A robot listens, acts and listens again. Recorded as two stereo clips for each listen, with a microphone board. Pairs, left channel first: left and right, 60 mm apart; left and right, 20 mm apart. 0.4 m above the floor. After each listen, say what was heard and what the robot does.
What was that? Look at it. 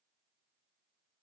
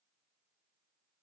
Keep listening.
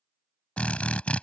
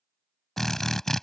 The drill: about 20° left or 160° left. Turn 20° left.
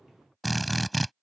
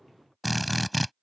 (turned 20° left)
Facing the drill.